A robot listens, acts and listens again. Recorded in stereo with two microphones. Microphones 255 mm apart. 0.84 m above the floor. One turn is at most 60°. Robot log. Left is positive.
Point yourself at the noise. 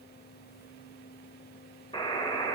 note: The buzzer: about 20° left or 160° left.
cmd yaw +20
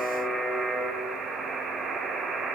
end: Facing the buzzer.